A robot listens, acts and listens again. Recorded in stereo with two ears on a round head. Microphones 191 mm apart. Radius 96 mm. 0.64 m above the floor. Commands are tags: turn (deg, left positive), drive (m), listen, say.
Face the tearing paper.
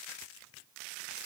<listen/>
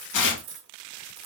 <turn deg="60"/>
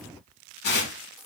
<turn deg="55"/>
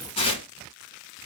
<turn deg="30"/>
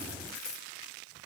<listen/>
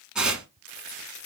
<say>Facing the tearing paper, 1 to 2 m away.</say>